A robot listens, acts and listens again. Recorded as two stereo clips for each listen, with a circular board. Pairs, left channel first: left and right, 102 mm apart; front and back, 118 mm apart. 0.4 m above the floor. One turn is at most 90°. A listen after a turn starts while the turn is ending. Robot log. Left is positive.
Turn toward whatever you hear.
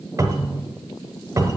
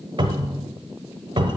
note: The cupboard door: 145° right.
cmd yaw -90
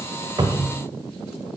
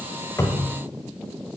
note: The cupboard door is now 50° right.
cmd yaw -50
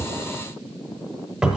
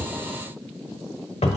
note: The cupboard door is now 10° right.
cmd yaw -10
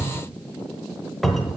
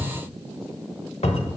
end: Facing the cupboard door, 1 to 2 m away.